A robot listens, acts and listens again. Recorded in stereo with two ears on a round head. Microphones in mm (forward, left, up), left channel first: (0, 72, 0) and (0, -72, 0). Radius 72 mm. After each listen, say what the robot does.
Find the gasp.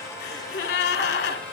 Turn 70° left.
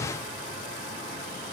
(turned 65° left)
Keep listening.
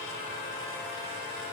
I heard a gasp, but can't make it out now. It was about 5° left or 45° left.